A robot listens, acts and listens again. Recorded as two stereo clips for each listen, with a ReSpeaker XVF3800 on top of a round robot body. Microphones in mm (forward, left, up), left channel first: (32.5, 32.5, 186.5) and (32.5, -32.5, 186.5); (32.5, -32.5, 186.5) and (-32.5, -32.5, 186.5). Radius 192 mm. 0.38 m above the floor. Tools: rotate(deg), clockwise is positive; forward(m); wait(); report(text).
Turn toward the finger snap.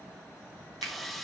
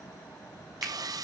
rotate(100)
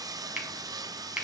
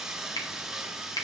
rotate(15)
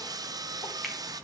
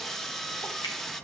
wait()
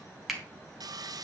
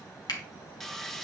report("Facing the finger snap, 2 to 4 m away.")